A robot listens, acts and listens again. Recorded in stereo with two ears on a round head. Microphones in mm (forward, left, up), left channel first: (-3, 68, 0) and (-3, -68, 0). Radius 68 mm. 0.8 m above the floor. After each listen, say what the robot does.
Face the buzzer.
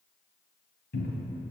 Keep listening.
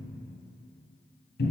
Keep listening.
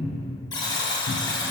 Turn 30° left.
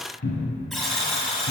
Found it: a buzzer, straight ahead, 1 to 2 m away.